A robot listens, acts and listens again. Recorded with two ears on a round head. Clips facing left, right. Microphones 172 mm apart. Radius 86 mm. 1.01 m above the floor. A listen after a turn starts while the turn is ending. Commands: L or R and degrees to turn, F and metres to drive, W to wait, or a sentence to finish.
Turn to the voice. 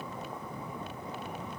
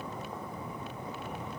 W
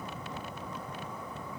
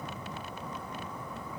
W
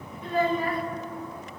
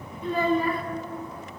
R90
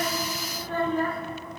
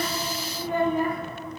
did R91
R15
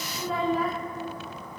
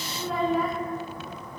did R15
Facing the child speaking.